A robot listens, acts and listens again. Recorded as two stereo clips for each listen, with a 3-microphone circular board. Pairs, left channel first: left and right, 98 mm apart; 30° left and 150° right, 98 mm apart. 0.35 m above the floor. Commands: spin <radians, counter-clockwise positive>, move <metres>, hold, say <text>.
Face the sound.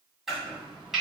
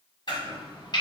say Facing the chopping, 1 to 2 m away.